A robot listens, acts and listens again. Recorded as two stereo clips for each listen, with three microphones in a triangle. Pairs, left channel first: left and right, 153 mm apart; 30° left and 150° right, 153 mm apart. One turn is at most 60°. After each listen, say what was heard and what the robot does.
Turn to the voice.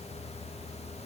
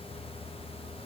Keep listening.
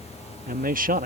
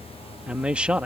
The man speaking: 65° right. Turn 60° right.
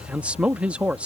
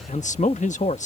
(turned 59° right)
The man speaking is now 10° right. Turn 10° right.
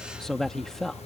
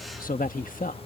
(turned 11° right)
Found it: a man speaking, straight ahead.